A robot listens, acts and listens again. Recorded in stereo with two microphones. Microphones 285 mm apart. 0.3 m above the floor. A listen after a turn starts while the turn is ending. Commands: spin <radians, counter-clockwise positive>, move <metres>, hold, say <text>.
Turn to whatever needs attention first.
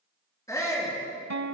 spin 0.52
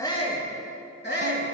spin 2.44
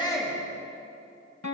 hold
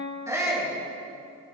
spin -0.17
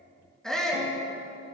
say Facing the shout.